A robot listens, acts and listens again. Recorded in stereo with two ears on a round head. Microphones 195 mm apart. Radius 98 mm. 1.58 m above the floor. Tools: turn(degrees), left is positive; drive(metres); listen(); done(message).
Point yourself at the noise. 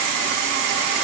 listen()
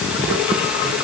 listen()
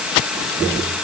done("I can't make out anything to turn to.")